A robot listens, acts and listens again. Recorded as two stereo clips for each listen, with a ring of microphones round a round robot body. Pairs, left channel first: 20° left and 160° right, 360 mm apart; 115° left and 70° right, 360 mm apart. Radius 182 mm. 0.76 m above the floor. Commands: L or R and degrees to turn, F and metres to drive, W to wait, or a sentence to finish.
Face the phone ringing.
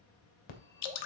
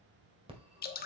L10
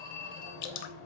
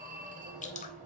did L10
Facing the phone ringing, 1 to 2 m away.